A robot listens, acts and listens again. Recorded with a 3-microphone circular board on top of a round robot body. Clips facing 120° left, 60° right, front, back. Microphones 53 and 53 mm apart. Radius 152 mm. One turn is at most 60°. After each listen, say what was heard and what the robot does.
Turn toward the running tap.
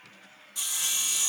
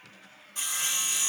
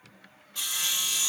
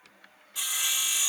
Keep listening.
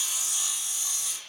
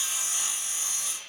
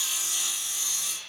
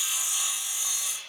Keep listening.
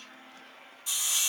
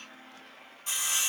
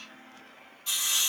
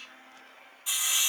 I can't make out a running tap to turn to.